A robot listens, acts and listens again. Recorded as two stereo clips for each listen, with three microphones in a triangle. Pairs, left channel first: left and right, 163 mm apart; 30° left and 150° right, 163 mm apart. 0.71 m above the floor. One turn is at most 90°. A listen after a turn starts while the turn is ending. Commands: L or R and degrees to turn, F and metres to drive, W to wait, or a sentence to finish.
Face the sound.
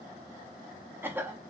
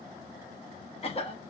R15
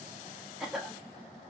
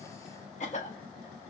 Found it: a cough, straight ahead, 1 to 2 m away.